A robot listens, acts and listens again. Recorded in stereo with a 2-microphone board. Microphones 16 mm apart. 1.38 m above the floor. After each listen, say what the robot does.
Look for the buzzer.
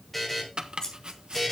Turn 30° left.
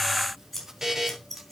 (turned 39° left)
Turn 35° right.
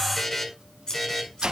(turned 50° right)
Turn 15° left.
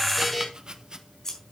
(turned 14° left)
Facing the buzzer, over 4 m away.